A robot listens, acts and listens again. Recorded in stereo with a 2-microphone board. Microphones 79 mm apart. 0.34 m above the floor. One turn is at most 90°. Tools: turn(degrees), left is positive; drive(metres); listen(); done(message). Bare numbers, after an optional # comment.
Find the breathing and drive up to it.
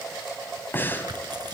# The breathing: about 25° left or 155° left.
turn(25)
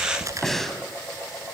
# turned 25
drive(1.0)
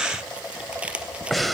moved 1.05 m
drive(1.0)
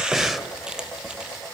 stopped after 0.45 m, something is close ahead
done("I am next to the breathing.")